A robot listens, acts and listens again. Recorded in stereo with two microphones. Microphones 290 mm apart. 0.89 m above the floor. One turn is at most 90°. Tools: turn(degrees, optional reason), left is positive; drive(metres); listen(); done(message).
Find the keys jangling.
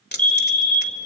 turn(degrees=35, reason="The keys jangling: about 35° left or 145° left.")
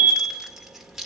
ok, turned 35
done("Found it: keys jangling, straight ahead, 1 to 2 m away.")